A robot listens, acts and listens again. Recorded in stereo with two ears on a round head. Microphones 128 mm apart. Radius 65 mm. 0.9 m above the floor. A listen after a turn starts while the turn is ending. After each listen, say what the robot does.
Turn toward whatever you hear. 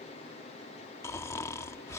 Turn 20° left.
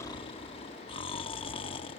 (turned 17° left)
Turn 140° left.
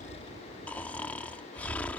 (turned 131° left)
Turn 10° left.
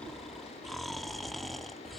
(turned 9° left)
Facing the snoring.